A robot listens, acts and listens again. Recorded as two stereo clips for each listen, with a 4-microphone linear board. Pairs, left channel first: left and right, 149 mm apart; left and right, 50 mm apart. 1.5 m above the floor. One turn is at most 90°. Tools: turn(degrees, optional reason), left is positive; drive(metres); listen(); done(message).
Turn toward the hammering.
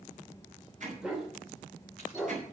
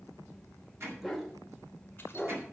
turn(degrees=-60, reason="The hammering: about 60° right or 120° right.")
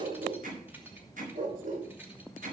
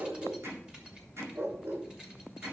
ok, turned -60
turn(degrees=-60, reason="So it is at 60° right.")
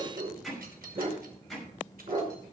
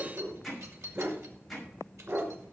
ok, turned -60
done("Facing the hammering, over 4 m away.")